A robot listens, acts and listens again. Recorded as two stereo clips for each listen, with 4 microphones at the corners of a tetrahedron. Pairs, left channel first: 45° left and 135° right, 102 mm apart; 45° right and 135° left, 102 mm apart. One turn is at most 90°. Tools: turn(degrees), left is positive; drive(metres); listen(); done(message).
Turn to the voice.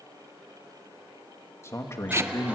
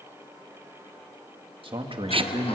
turn(degrees=90)
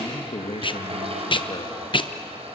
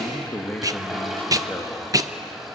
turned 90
turn(degrees=25)
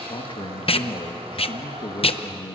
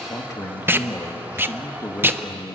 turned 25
turn(degrees=10)
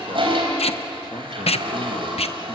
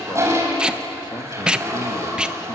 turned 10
listen()
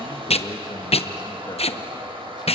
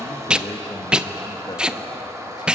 listen()
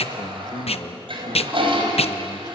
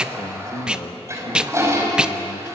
done("Found it: a man speaking, straight ahead.")